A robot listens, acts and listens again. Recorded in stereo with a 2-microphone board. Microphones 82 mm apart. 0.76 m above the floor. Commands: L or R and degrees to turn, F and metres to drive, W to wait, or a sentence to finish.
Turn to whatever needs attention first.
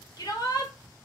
L55
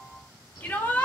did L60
L25
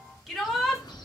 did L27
Found it: a shout, straight ahead.